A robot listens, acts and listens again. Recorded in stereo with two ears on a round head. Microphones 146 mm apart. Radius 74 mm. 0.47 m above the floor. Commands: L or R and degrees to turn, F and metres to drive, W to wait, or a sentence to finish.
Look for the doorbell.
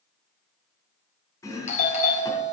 L45
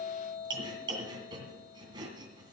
L80
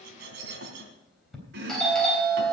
Facing the doorbell, 2 to 4 m away.